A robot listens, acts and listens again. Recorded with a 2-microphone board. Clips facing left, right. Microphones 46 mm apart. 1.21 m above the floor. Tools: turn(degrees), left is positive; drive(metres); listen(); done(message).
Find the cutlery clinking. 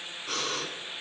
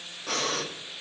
listen()
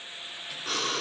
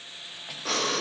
listen()
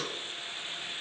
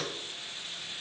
done("I can't make out cutlery clinking to turn to.")